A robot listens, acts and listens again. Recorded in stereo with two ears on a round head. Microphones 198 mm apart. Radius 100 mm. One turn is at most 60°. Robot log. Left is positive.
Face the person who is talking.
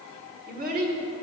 note: The child speaking: about 40° right or 140° right.
cmd yaw -40
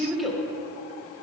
end: Found it: a child speaking, straight ahead.